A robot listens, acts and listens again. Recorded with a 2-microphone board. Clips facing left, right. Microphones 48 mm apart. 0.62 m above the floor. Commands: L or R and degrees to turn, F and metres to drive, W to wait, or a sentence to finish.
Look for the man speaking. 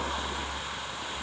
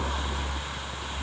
W
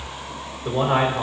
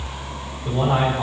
L45
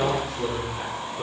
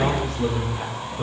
Facing the man speaking.